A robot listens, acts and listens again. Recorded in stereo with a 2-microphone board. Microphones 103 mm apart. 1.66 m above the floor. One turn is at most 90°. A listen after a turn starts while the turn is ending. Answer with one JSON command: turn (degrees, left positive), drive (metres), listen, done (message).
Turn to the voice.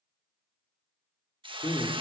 {"turn": 50}
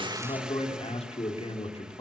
{"turn": 80}
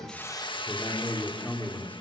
{"turn": 15}
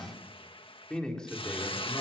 {"turn": 10}
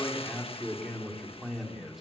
{"done": "Found it: a man speaking, straight ahead."}